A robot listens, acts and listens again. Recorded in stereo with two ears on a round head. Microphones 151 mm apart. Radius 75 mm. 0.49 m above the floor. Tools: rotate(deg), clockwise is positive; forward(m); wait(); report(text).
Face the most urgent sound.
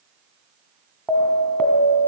rotate(-30)
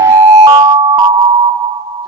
rotate(25)
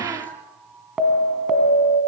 report("Found it: an alarm, straight ahead.")